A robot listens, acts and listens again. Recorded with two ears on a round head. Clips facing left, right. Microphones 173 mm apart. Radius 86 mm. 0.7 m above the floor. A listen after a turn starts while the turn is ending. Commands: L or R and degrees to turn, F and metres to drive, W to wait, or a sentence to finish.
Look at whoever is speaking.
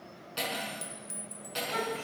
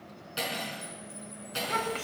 R90
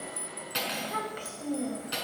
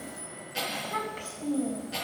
L15
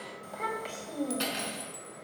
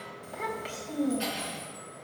Found it: a child speaking, straight ahead, 2 to 4 m away.